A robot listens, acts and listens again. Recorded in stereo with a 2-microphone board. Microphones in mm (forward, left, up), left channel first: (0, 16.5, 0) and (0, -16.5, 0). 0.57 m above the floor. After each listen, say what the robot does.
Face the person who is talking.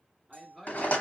Turn 30° right.
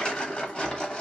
Keep listening.
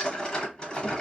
Keep listening.
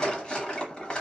I heard a man speaking, but can't make it out now. It was about 25° left or 145° right.